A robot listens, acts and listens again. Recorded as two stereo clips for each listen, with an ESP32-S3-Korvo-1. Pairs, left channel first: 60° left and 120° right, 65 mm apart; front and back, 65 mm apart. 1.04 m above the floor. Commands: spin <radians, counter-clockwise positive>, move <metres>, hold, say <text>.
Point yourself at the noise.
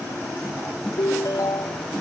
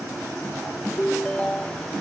spin 1.40
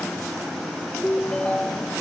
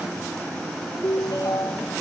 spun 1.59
spin -0.17
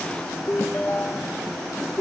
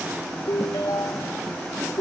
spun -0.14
say Found it: a ringtone, straight ahead.